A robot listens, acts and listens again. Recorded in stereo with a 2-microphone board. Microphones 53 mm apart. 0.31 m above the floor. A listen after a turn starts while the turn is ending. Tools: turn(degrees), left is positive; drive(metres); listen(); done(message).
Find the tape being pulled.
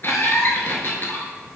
listen()
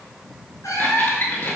listen()
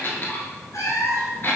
done("I can't make out tape being pulled, only a squeak and a cat meowing.")